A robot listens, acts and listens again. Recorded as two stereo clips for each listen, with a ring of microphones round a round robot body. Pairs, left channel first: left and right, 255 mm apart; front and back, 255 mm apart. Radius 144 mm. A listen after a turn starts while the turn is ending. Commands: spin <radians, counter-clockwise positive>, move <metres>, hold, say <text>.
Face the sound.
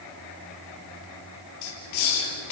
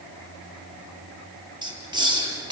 spin 1.83
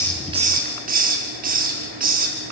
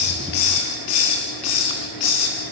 spin -0.61
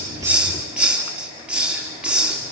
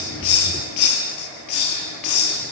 say Facing the hiss.